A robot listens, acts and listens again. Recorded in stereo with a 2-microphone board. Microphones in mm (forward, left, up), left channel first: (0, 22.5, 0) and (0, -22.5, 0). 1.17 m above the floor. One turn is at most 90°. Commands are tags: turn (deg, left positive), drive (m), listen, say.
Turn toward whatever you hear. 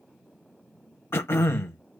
<turn deg="65"/>
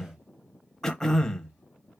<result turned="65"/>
<turn deg="10"/>
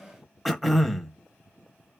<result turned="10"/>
<say>Found it: throat clearing, straight ahead, under 1 m away.</say>